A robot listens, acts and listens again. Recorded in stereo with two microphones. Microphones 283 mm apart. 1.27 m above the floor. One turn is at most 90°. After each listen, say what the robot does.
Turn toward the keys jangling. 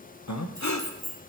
Turn 30° right.
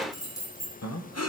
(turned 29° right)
Turn 15° left.
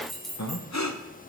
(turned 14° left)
Found it: keys jangling, straight ahead.